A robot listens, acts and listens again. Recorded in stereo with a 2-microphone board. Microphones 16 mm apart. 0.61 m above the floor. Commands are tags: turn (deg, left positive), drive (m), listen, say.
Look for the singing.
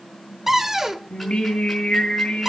<turn deg="70"/>
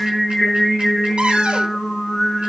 <say>Facing the singing, 2 to 4 m away.</say>